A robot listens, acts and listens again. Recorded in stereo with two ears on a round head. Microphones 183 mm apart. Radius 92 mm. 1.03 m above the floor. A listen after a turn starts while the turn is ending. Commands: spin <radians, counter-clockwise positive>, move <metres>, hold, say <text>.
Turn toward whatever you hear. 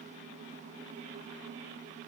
hold
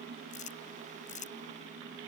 spin 0.61
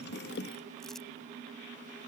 hold
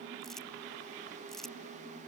say Found it: crumpling, straight ahead.